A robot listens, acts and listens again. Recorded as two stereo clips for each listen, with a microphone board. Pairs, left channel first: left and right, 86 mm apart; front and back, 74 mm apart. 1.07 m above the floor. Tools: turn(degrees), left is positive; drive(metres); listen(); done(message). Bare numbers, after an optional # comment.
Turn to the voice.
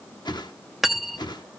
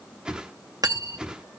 listen()
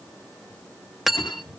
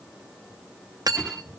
listen()
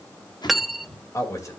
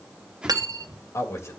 # The man speaking: 45° left.
turn(45)
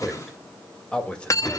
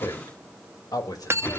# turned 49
# The man speaking is now 15° left.
turn(15)
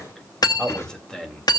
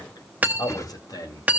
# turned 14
# The man speaking is now 10° left.
turn(10)
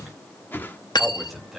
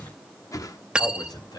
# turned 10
done("Facing the man speaking, 2 to 4 m away.")